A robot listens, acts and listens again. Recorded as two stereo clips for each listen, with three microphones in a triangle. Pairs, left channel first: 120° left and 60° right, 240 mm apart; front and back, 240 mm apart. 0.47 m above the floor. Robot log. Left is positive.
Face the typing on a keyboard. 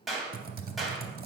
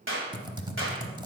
note: The typing on a keyboard: 105° right.
cmd yaw -105
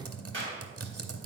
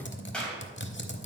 note: The typing on a keyboard is now 45° right.
cmd yaw -45
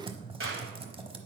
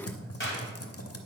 note: The typing on a keyboard is now 10° left.
cmd yaw +10
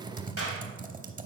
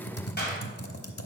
end: Facing the typing on a keyboard, under 1 m away.